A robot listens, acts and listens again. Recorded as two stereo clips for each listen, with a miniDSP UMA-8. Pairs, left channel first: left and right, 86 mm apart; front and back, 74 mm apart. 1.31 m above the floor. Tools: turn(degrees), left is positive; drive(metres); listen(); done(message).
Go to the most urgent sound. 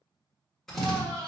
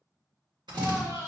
turn(degrees=-135)
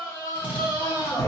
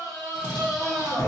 turn(degrees=30)
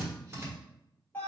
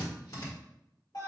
turn(degrees=20)
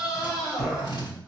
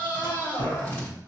drive(metres=1.0)
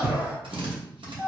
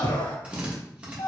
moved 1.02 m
turn(degrees=-15)
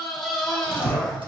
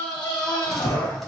drive(metres=1.0)
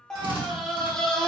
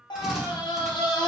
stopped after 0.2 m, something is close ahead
done("Arrived at the scream, straight ahead.")